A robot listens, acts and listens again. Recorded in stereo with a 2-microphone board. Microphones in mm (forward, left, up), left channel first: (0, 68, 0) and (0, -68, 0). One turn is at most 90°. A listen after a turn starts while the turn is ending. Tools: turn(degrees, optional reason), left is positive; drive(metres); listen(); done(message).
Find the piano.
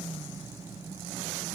listen()
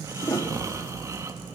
turn(degrees=20, reason="The piano: about 20° left or 160° left.")
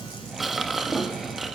done("Found it: a piano, straight ahead, 1 to 2 m away.")